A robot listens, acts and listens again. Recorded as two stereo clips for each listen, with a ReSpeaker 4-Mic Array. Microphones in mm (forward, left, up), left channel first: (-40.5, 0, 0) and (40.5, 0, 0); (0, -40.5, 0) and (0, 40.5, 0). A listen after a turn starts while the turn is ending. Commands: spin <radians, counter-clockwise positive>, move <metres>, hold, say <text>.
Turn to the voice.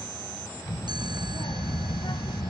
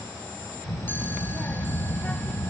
spin -2.88
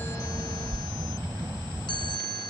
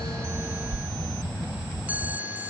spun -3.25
spin 0.35
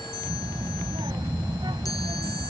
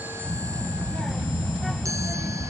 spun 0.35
say Facing the child speaking.